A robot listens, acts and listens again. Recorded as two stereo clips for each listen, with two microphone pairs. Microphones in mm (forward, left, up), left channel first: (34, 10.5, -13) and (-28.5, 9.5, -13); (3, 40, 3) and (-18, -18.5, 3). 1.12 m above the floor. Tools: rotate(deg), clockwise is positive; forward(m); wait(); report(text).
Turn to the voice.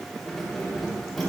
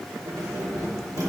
wait()
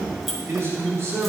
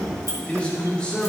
rotate(-145)
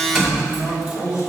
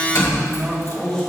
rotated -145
report("Facing the man speaking.")